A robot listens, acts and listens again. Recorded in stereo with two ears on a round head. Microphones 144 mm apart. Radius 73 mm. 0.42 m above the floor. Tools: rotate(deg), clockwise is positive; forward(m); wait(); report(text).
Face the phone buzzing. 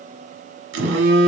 rotate(90)
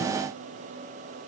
wait()
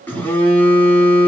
rotate(-10)
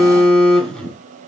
report("Facing the phone buzzing, under 1 m away.")